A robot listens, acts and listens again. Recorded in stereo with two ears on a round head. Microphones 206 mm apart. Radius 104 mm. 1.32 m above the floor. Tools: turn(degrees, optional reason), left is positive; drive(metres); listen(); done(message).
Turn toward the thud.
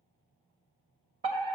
listen()
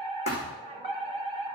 turn(degrees=30, reason="The thud: about 30° left or 150° left.")
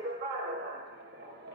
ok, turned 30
listen()
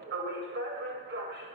done("I heard a thud, but can't make it out now. It was about straight ahead or 120° left.")